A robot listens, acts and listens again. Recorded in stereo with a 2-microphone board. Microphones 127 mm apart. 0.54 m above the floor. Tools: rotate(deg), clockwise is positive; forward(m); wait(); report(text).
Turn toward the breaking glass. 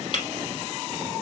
rotate(-45)
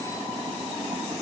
wait()
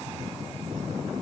report("I heard breaking glass, but can't make it out now. It was about straight ahead or 90° left.")